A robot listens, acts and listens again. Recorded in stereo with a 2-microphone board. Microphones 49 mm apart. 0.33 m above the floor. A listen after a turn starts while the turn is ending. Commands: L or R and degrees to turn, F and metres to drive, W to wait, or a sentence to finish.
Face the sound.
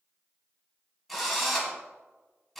L30
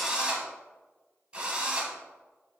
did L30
R25
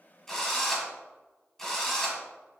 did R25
L10
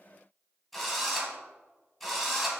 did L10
Facing the drill, 1 to 2 m away.